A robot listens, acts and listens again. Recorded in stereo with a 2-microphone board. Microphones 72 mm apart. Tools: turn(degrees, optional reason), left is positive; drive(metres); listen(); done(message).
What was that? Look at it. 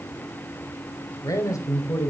turn(degrees=50, reason="The man speaking: about 50° left or 130° left.")
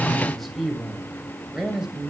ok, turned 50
turn(degrees=-10, reason="So it is at 10° right.")
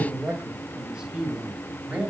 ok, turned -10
turn(degrees=-20, reason="The man speaking is now 20° right.")
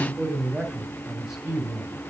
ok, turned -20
turn(degrees=-10, reason="The man speaking is now 10° right.")
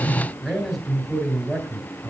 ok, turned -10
done("Facing the man speaking.")